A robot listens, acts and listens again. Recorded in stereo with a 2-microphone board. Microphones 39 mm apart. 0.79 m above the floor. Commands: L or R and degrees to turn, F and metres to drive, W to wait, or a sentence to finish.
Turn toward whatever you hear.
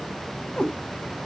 L20
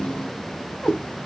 L20
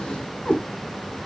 L30
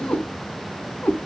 L125
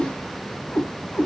L50
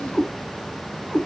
L10
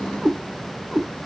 Facing the cat meowing, 2 to 4 m away.